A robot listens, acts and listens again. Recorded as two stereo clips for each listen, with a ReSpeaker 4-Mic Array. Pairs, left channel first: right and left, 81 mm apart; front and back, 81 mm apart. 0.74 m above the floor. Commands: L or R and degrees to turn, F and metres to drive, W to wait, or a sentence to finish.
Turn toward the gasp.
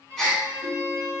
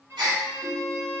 R175
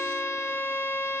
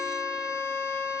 Facing where the gasp came from. I can't hear it now.